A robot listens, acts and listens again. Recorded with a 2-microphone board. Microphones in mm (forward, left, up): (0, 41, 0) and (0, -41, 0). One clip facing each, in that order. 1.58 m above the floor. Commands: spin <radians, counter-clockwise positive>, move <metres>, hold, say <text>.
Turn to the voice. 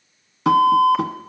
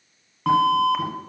hold
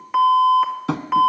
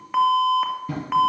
hold
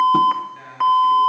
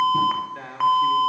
spin -1.22
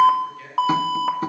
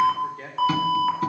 spin -0.70
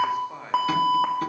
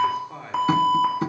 say Found it: a man speaking, straight ahead.